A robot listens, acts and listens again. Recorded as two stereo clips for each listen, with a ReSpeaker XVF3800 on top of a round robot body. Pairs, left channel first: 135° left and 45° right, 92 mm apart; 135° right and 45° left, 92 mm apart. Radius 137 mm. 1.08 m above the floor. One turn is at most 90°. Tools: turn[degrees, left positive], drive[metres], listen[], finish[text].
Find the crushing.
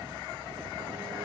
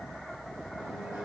Action: listen[]
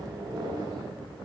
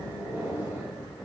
Action: listen[]
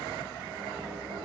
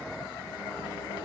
Action: finish[I can't make out crushing to turn to.]